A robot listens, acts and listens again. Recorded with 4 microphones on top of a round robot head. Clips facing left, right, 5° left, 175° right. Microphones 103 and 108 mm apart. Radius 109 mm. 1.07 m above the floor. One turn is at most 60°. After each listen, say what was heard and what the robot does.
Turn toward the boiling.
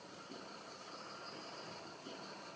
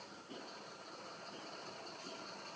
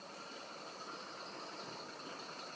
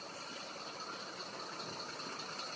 Keep listening.
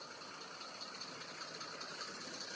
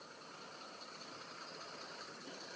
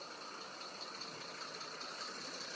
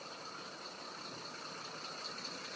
Keep listening.
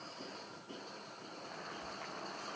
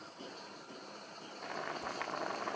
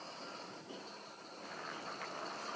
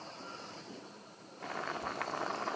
The boiling: 130° right. Turn 60° right.
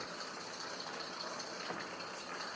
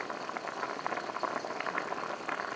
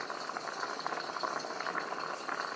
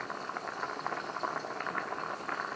The boiling is now 80° right. Turn 60° right.
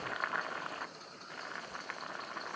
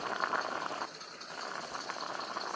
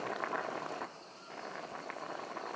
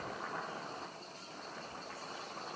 The boiling is now 30° right. Turn 30° right.
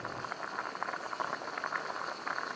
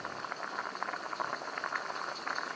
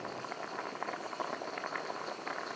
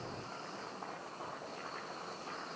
Facing the boiling, 1 to 2 m away.